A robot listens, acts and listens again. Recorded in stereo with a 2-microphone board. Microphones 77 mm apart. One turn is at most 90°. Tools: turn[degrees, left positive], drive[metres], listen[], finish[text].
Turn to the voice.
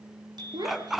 Thought: The child speaking: about 65° right or 115° right.
Action: turn[-65]
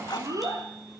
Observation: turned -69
Thought: So it is at 50° right.
Action: turn[-50]
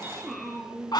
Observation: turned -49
Action: finish[Found it: a child speaking, straight ahead.]